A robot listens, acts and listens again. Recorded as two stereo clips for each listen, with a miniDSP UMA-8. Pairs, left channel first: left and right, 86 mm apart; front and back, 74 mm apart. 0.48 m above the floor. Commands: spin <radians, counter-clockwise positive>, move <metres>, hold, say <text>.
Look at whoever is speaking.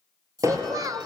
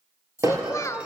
spin -0.79
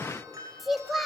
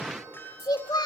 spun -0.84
say Found it: a child speaking, straight ahead.